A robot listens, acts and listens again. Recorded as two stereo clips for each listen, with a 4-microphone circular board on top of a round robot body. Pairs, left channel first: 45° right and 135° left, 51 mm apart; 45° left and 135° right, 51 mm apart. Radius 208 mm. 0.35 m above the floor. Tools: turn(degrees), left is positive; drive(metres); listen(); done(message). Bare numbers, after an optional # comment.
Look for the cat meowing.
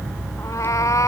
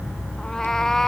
# The cat meowing: 35° right.
turn(-35)
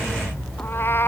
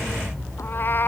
done("Facing the cat meowing.")